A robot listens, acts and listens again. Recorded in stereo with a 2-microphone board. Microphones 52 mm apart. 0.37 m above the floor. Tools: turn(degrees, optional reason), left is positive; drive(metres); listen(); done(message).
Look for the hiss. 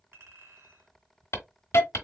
turn(degrees=60, reason="The hiss: about 60° left or 120° left.")
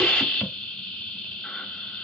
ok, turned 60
turn(degrees=15, reason="So it is at 15° left.")
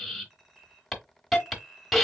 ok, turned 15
done("Facing the hiss.")